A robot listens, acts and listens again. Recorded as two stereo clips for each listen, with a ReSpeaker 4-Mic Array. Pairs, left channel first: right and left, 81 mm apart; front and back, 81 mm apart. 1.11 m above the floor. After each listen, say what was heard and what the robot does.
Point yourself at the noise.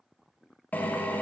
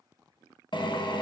The drill: 20° right. Turn 20° right.
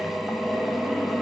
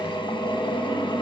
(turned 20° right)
Found it: a drill, straight ahead.